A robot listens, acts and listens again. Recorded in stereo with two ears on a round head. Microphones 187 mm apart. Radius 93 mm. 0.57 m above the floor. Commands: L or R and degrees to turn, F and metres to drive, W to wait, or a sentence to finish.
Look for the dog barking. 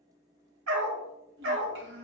R65
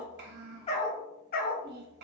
L50
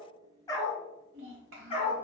L30
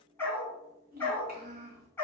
L10
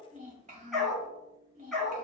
Found it: a dog barking, straight ahead, 1 to 2 m away.